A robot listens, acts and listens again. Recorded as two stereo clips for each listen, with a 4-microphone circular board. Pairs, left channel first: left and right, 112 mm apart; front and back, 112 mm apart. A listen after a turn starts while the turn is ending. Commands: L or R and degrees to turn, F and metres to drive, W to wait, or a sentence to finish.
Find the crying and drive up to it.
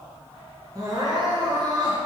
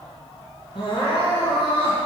R40
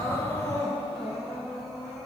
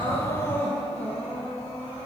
F1.0
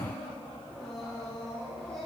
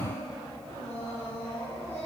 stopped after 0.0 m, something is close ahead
Blocked. The crying is further on, straight ahead.